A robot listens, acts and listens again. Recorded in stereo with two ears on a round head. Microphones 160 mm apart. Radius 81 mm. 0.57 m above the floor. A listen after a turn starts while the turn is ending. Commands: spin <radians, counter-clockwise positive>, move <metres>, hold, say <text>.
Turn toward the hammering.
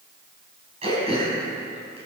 hold
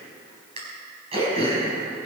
hold
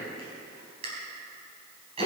say I can't make out hammering, only throat clearing.